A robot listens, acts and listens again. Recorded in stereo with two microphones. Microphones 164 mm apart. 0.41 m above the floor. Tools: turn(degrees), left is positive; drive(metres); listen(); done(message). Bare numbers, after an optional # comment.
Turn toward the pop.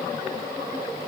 listen()
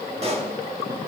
# The pop: about 40° right or 140° right.
turn(-40)
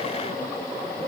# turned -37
listen()
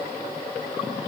done("I heard a pop, but can't make it out now. It was about 5° right or 105° right.")